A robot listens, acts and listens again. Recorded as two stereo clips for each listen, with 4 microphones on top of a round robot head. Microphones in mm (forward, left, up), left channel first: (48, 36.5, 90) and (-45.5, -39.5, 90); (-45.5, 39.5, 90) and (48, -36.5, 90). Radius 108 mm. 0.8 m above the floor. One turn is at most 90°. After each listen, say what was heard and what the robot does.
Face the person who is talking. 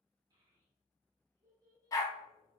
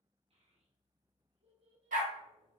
The child speaking: 80° right. Turn 80° right.
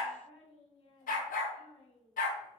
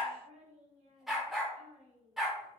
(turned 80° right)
Facing the child speaking.